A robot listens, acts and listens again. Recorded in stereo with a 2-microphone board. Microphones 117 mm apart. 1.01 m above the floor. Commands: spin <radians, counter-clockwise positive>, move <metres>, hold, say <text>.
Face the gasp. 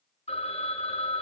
hold
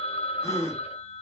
spin 0.52
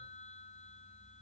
hold
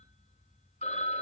say I heard a gasp, but can't make it out now. It was about straight ahead or 120° left.